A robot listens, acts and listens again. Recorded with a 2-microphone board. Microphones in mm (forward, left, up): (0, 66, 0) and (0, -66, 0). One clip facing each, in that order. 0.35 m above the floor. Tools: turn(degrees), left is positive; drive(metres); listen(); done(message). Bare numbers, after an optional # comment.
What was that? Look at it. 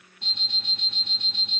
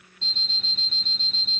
# The alarm clock: about 15° left or 165° left.
turn(15)
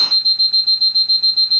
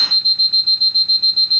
done("Facing the alarm clock.")